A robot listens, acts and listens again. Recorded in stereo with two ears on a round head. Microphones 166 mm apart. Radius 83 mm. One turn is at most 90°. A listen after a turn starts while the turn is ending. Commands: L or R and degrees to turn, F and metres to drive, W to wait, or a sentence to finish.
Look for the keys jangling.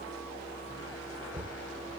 W
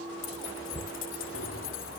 L75
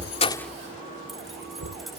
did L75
W
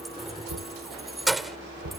Facing the keys jangling.